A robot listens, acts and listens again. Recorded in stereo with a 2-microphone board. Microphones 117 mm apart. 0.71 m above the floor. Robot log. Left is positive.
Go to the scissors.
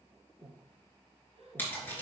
note: The scissors: about 15° left or 165° left.
cmd yaw +15
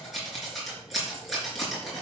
cmd fwd 1.0
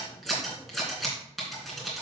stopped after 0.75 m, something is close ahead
end: Something is in my way. I am facing the scissors but have not reached it.